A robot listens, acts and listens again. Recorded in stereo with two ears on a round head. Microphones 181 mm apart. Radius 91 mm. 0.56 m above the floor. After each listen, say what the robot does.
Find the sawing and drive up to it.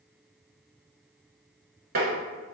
Keep listening.
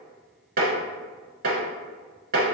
Keep listening.
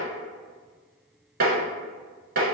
I can't make out sawing, only tapping.